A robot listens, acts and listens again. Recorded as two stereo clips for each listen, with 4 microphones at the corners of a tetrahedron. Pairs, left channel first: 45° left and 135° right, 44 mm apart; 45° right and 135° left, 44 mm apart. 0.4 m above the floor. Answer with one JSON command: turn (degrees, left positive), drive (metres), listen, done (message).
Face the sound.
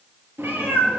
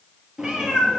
{"turn": -150}
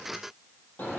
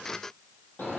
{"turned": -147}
{"done": "Facing the cat meowing."}